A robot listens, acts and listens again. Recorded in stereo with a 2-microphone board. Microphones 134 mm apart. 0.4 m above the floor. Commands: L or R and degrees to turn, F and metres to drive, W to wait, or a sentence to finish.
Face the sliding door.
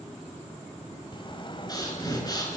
L35
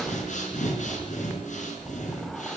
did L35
Found it: a sliding door, straight ahead, 1 to 2 m away.